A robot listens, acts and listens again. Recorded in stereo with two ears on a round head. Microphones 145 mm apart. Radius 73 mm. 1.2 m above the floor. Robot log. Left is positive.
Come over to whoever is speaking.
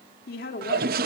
note: The woman speaking: about 60° left or 120° left.
cmd yaw +60
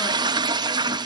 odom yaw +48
cmd idle
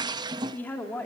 note: So it is at 10° left.
cmd yaw +10
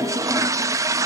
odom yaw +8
cmd idle
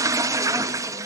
cmd idle
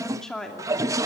cmd fwd 1.0
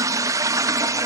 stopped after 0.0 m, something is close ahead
cmd idle
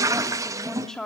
end: Something is in my way. I am facing the woman speaking but have not reached it.